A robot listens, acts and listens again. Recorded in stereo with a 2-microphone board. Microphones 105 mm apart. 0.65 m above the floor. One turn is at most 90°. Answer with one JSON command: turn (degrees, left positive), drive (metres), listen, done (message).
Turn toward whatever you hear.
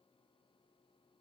{"listen": true}
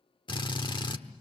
{"turn": 50}
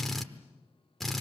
{"done": "Facing the drill."}